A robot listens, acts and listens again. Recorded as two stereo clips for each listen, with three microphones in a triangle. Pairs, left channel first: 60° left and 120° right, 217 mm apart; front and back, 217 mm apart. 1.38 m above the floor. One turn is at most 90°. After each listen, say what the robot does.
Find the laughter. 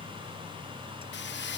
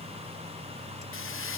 Keep listening.
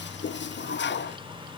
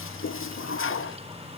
Keep listening.
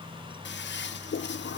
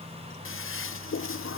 I can't make out laughter, only a toilet flushing.